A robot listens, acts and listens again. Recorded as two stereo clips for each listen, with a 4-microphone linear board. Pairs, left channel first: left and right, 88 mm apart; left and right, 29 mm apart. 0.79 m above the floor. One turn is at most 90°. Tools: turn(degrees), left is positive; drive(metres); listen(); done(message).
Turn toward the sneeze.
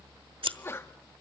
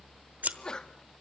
turn(degrees=25)
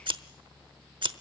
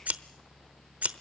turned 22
listen()
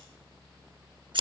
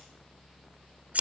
done("I heard a sneeze, but can't make it out now. It was about 5° left or 130° left.")